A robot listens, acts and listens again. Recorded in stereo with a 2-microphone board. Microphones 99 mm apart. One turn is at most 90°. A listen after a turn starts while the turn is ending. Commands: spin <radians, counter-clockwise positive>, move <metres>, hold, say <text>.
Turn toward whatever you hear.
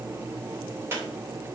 spin -0.44
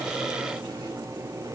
hold
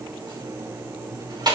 spin -1.57
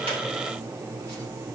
spin -0.61
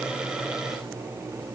hold
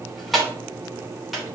say Found it: a squeak, straight ahead, 2 to 4 m away.